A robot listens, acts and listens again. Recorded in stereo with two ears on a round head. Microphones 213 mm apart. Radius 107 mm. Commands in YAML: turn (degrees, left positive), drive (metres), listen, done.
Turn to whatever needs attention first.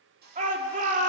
turn: -30
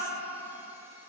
listen: true
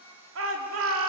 turn: -115
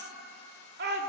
turn: -45
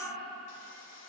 listen: true
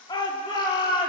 turn: 20
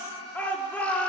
done: "Facing the shout."